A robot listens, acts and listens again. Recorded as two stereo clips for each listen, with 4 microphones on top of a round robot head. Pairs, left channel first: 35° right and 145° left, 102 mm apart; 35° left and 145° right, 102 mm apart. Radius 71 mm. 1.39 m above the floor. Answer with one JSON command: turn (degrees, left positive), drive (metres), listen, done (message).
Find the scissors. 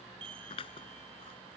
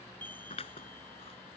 {"done": "Found it: scissors, straight ahead."}